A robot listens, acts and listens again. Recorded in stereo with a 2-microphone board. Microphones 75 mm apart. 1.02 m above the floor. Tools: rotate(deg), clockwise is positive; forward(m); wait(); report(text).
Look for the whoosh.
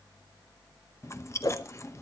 rotate(-55)
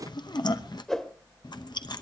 rotate(-10)
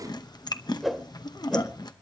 report("Facing the whoosh.")